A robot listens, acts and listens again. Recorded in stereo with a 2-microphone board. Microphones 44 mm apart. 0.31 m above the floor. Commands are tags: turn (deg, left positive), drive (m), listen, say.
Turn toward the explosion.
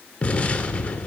<turn deg="30"/>
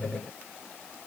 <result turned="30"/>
<listen/>
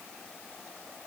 <say>I heard an explosion, but can't make it out now. It was about straight ahead or 120° left.</say>